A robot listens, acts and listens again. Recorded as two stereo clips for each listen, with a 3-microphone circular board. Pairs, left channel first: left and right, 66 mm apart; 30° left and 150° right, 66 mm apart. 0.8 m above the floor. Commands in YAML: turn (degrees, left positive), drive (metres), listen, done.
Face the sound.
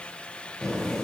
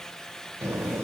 turn: 170
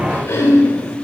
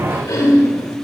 turn: 50
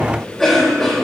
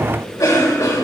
turn: 10
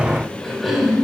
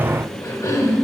done: "Found it: a cough, straight ahead."